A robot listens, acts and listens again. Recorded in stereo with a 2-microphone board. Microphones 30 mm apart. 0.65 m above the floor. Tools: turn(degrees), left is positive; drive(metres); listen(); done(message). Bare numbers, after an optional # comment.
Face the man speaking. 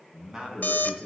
# The man speaking: about 20° right or 160° right.
turn(-20)
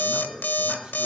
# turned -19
# The man speaking: about 35° right or 145° right.
turn(-35)
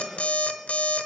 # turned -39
listen()
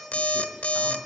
listen()
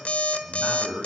# So it is at 130° right.
turn(-130)
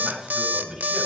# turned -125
# The man speaking is now 15° right.
turn(-15)
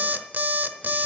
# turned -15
listen()
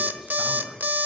done("Facing the man speaking.")